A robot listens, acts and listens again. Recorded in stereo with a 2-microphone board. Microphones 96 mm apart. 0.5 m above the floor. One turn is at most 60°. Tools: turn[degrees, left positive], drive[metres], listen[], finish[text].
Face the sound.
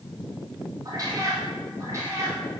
Thought: The cat meowing: about 30° right or 150° right.
Action: turn[-30]
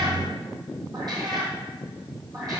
Thought: The cat meowing: about 40° right or 140° right.
Action: turn[-40]
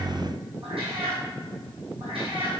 Thought: So it is at 110° right.
Action: turn[-60]
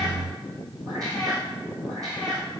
Thought: The cat meowing is now 40° right.
Action: turn[-40]
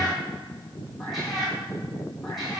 Action: finish[Facing the cat meowing.]